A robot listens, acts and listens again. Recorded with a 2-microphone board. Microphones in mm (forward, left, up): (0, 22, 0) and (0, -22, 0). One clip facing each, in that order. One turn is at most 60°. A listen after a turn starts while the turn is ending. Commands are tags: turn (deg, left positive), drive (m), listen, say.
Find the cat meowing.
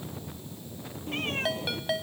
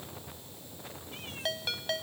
<turn deg="55"/>
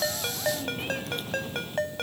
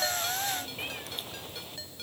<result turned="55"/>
<listen/>
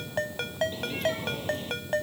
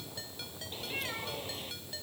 <say>Found it: a cat meowing, straight ahead.</say>